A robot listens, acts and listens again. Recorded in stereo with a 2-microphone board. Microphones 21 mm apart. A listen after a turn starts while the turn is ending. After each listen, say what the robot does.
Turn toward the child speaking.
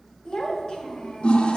Turn 50° left.
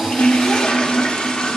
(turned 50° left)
Keep listening.
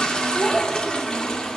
Turn 35° left.
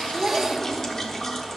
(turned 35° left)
Keep listening.
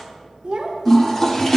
Turn 50° right.
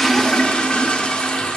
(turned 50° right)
Keep listening.
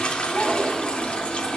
Turn 15° right.
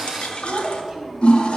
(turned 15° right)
Facing the child speaking, 1 to 2 m away.